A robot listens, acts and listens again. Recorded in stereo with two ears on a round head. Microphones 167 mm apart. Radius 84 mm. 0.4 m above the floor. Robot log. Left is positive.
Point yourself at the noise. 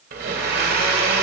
note: The blender: about 55° right or 125° right.
cmd yaw -55
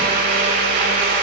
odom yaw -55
note: So it is at 55° right.
cmd yaw -55
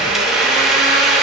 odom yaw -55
end: Found it: a blender, straight ahead, 1 to 2 m away.